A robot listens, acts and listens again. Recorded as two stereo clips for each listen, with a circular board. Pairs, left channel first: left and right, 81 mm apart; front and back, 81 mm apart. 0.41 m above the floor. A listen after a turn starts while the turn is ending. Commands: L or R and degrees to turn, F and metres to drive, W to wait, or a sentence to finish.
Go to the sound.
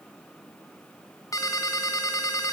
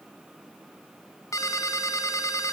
L45
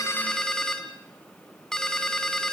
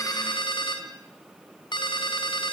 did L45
F1.0
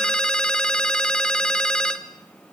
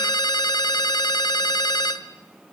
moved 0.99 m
L10
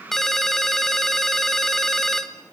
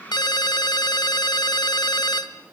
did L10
F1.0
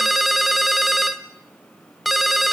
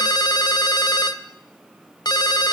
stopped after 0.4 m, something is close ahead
I am next to the ringtone.